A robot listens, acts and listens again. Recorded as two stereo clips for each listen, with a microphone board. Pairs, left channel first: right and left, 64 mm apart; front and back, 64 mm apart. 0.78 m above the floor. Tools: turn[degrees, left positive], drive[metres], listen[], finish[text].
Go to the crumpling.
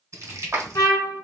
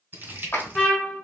Thought: The crumpling: 125° left.
Action: turn[125]
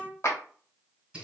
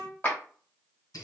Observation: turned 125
Thought: The crumpling is now 15° left.
Action: turn[15]
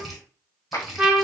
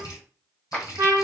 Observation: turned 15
Action: drive[1.0]
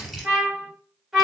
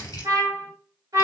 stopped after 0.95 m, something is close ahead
Action: finish[Arrived at the crumpling, straight ahead.]